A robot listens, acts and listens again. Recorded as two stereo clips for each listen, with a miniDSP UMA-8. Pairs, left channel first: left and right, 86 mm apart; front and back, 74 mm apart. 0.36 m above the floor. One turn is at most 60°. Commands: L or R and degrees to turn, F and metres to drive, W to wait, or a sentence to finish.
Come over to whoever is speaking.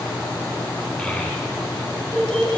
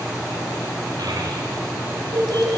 L60
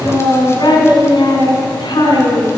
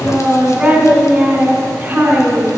L60
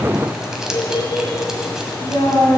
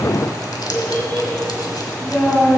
L60
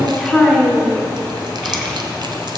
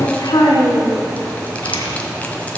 F1.0
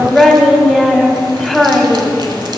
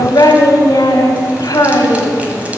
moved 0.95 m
F1.0
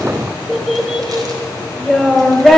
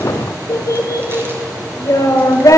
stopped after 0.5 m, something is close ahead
I am next to the child speaking.